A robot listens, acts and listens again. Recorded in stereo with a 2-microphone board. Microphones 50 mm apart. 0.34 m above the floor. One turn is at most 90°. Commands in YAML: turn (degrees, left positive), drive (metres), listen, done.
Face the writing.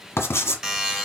turn: 65
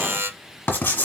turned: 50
turn: 55
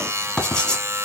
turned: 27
turn: 25
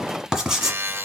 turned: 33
done: "Facing the writing."